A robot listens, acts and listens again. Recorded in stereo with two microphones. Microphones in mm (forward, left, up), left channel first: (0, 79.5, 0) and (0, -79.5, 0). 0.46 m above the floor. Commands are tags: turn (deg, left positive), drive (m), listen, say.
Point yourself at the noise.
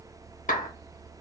<turn deg="55"/>
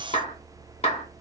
<turn deg="50"/>
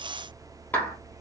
<turn deg="15"/>
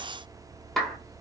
<say>Facing the clap, under 1 m away.</say>